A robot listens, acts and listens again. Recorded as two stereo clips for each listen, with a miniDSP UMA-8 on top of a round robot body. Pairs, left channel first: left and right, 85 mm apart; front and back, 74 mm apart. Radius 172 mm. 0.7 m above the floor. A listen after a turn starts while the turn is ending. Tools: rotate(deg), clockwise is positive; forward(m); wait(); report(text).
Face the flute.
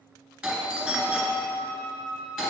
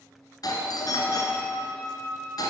rotate(170)
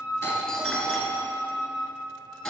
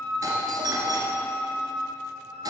rotate(-10)
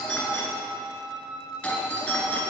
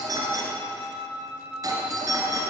report("Found it: a flute, straight ahead.")